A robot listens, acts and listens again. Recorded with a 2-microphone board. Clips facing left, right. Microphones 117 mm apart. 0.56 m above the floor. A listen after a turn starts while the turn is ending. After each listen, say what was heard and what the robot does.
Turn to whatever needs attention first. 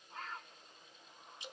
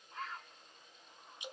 Keep listening.
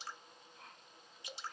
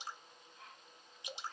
Keep listening.
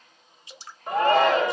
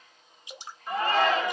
The shout: about 60° left or 120° left. Turn 60° left.
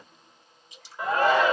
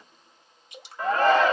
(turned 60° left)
So it is at 10° left. Turn 10° left.
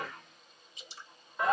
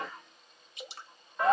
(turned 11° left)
Found it: a shout, straight ahead.